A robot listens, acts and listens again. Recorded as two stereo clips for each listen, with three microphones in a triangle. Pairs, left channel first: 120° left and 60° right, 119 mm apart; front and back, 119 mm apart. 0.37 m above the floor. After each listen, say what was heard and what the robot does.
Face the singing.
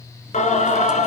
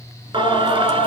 The singing: 135° left. Turn 135° left.
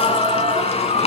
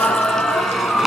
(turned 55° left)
The singing is now 90° left. Turn 90° left.
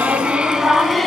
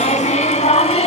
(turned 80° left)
The singing is now 30° left. Turn 30° left.
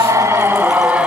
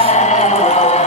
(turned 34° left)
The singing is now 20° left. Turn 20° left.
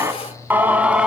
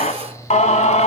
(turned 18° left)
The singing is now 20° left. Turn 20° left.
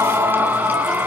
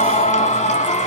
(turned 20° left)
The singing is now 15° left. Turn 15° left.
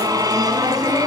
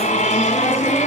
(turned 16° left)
Facing the singing, 1 to 2 m away.